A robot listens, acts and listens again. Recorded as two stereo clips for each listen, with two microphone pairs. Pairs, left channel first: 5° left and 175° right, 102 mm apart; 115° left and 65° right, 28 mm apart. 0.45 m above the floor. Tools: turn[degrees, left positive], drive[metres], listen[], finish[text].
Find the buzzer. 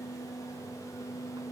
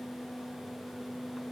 Action: listen[]
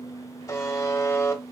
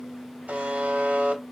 Thought: The buzzer: 50° right.
Action: turn[-50]
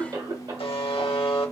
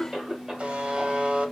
Thought: The buzzer is now 20° right.
Action: turn[-20]
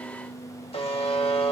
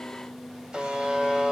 Action: finish[Facing the buzzer, under 1 m away.]